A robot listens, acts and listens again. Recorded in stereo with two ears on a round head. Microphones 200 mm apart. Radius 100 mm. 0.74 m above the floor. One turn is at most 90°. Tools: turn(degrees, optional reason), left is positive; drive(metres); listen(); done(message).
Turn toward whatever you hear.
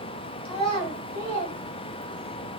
turn(degrees=30, reason="The child speaking: about 30° left or 150° left.")
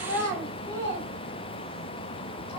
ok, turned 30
turn(degrees=10, reason="So it is at 10° left.")
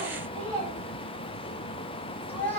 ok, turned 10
done("Found it: a child speaking, straight ahead, 2 to 4 m away.")